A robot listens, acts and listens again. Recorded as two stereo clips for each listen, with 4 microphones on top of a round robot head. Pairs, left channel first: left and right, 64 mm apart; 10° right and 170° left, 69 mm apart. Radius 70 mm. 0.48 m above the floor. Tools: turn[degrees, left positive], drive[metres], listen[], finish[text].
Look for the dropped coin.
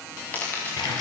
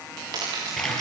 Thought: The dropped coin: 150° left.
Action: turn[150]
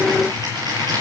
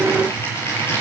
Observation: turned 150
Action: finish[Facing where the dropped coin came from. I can't hear it now.]